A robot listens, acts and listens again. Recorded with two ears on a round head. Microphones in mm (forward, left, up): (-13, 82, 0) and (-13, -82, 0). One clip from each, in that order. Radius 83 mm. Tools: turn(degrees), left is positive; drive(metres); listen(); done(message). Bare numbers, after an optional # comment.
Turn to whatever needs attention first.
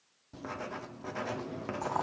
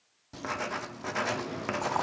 listen()
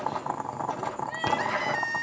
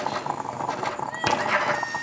turn(30)
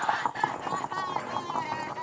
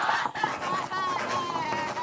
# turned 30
# So it is at 20° right.
turn(-20)
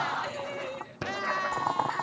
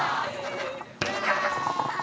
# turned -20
done("Facing the crying.")